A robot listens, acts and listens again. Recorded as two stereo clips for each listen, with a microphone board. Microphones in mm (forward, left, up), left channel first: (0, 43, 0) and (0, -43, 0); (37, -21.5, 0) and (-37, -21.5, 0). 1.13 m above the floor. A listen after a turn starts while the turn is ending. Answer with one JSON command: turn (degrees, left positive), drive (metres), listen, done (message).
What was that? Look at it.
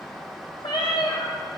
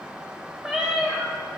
{"turn": 105}
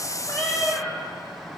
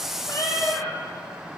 {"done": "Found it: a cat meowing, straight ahead, 1 to 2 m away."}